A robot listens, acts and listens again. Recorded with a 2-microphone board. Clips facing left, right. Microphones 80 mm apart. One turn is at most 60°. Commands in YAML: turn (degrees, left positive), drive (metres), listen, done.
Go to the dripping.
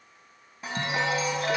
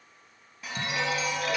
listen: true
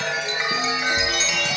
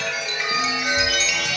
listen: true
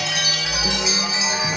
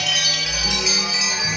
done: "I can't make out dripping to turn to."